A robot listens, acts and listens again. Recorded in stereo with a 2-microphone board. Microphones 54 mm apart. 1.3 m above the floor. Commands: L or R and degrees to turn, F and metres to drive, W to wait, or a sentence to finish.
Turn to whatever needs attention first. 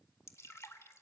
W
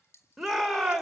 L30
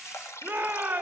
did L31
R30
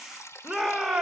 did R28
Found it: a shout, straight ahead.